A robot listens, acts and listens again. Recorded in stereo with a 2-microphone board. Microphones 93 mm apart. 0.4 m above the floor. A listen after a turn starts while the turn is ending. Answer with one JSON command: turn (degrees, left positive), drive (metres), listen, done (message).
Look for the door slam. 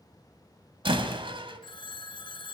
{"turn": -70}
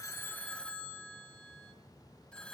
{"listen": true}
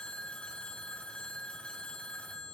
{"done": "I heard a door slam, but can't make it out now. It was about straight ahead or 40° right."}